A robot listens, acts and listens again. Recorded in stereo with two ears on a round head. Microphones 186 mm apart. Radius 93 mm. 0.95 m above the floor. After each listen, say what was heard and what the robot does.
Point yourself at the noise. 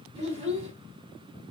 The child speaking: about 30° right or 150° right. Turn 30° right.
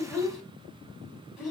Facing the child speaking, 2 to 4 m away.